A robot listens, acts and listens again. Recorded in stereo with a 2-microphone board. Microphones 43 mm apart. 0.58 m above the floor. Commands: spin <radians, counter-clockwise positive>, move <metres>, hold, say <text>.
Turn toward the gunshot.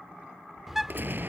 spin -0.96
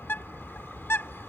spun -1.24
hold
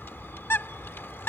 say I heard a gunshot, but can't make it out now. It was about 20° left or 55° right.